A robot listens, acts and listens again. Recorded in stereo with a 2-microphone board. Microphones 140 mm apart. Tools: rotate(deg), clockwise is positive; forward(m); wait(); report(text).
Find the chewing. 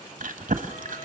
rotate(90)
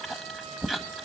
report("Found it: chewing, straight ahead.")